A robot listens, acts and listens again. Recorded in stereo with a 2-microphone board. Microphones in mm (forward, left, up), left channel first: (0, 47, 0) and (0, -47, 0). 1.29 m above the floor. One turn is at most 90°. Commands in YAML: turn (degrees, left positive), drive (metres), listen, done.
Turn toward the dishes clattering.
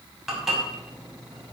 turn: 30
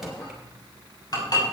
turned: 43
turn: 90
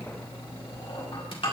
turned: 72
turn: 65
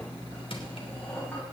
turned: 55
turn: 15
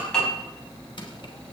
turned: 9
done: "Facing the dishes clattering, over 4 m away."